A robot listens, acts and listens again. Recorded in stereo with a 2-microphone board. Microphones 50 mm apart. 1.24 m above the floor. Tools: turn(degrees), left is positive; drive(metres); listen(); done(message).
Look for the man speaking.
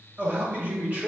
turn(degrees=-35)
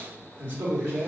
turn(degrees=-125)
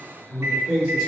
turn(degrees=-20)
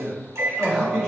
turn(degrees=-10)
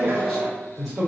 done("Found it: a man speaking, straight ahead.")